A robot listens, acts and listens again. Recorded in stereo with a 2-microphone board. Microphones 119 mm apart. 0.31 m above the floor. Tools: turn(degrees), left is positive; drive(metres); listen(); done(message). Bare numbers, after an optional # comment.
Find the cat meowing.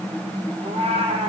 # The cat meowing: about 60° right or 120° right.
turn(-60)
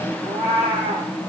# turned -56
# So it is at 55° right.
turn(-55)
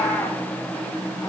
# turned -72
# The cat meowing is now 25° left.
turn(25)
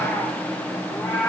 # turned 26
# The cat meowing is now 10° left.
turn(10)
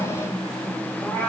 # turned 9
done("Facing the cat meowing.")